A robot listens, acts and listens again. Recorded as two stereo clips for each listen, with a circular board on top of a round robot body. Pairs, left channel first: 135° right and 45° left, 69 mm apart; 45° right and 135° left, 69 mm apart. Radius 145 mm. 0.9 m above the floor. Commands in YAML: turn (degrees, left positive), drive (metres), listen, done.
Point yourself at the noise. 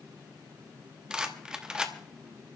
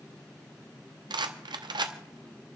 turn: 125
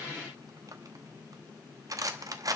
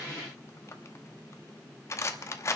done: "Facing the rattle, under 1 m away."